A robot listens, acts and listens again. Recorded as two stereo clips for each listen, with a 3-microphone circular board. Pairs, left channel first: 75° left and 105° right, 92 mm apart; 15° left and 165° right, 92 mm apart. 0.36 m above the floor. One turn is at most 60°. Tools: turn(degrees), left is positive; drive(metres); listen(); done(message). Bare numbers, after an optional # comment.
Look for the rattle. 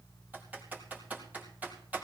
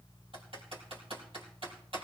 listen()
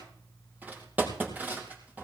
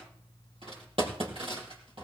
listen()
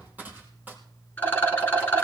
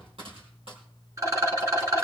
# The rattle: 140° left.
turn(60)
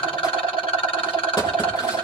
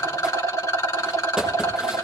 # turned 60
# The rattle is now 70° left.
turn(60)
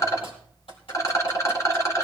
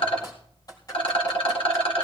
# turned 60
# The rattle is now 20° left.
turn(20)
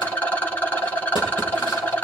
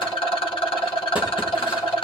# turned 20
done("Facing the rattle, 2 to 4 m away.")